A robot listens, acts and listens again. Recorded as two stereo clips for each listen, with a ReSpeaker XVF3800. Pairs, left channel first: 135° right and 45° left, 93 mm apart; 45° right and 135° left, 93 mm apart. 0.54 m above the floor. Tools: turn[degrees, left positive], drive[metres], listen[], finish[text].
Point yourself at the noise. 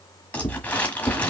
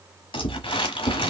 Thought: The crumpling: 60° right.
Action: turn[-60]
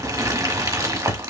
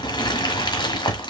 Action: finish[Facing the crumpling, 1 to 2 m away.]